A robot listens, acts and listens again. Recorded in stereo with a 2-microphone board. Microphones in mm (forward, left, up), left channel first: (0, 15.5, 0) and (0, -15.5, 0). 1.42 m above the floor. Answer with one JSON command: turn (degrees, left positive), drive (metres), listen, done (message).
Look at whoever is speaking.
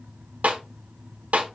{"listen": true}
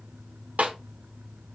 {"listen": true}
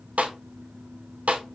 {"done": "I can't make out anyone speaking to turn to."}